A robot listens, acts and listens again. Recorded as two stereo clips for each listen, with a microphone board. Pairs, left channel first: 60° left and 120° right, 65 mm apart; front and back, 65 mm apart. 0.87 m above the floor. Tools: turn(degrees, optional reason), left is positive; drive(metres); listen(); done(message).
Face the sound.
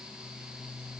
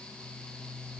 listen()
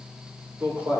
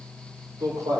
turn(degrees=-175, reason="The man speaking: 175° right.")
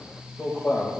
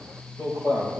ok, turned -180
turn(degrees=20, reason="The man speaking is now 20° left.")
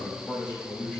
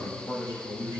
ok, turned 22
done("Facing the man speaking, over 4 m away.")